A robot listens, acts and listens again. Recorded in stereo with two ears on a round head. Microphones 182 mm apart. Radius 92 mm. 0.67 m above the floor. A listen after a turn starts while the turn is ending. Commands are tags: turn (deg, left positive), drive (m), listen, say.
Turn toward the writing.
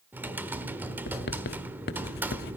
<turn deg="50"/>
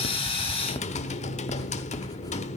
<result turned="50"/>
<listen/>
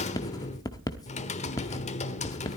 <turn deg="20"/>
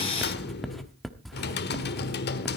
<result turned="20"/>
<say>Found it: writing, straight ahead, 1 to 2 m away.</say>